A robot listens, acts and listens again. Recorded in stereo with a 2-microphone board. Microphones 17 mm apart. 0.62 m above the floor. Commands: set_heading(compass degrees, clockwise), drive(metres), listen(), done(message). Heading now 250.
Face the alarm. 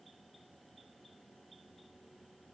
listen()
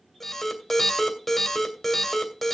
set_heading(220)
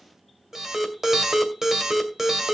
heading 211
set_heading(236)
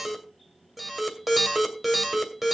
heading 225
set_heading(235)
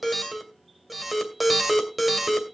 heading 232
done("Found it: an alarm, straight ahead.")